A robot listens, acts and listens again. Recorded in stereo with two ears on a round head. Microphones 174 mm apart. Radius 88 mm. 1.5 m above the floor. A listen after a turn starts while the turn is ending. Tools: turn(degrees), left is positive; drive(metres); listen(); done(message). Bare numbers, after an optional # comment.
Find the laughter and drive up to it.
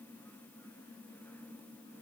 listen()
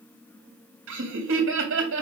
# The laughter: about 75° right or 105° right.
turn(-75)
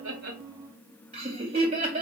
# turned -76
# So it is at 30° right.
turn(-30)
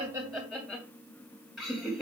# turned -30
drive(1.0)
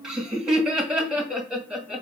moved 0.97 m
drive(1.0)
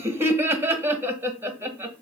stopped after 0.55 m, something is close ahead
# The laughter is now 10° right.
turn(-10)
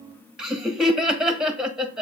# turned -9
done("Arrived at the laughter, straight ahead.")